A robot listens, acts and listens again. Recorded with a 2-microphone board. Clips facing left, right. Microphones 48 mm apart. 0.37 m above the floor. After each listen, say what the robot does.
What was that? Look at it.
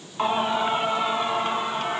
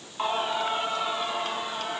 Turn 35° left.
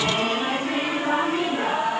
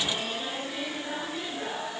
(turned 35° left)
Turn 100° left.
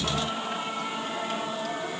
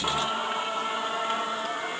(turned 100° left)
Turn 40° right.
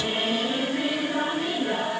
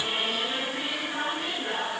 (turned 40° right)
Turn 10° right.
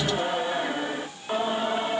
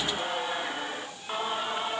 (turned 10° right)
Facing the singing.